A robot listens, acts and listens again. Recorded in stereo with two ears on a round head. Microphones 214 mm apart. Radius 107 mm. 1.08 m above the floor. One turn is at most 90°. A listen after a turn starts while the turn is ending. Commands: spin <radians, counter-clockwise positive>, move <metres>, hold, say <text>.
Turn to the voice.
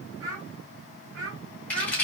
spin -0.87
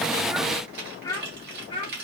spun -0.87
spin 0.44
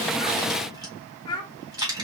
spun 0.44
spin 0.35
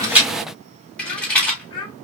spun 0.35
spin 0.35
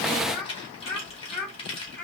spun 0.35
say Found it: a child speaking, straight ahead, 1 to 2 m away.